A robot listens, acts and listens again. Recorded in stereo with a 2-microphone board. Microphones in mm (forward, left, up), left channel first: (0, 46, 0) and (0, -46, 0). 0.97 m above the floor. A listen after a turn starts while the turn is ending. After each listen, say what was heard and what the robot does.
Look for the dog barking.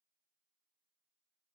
Keep listening.
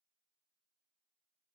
Keep listening.
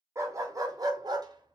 The dog barking: about 45° right or 135° right. Turn 45° right.
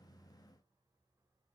Keep listening.
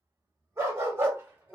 So it is at 25° right. Turn 25° right.
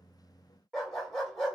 Facing the dog barking, 1 to 2 m away.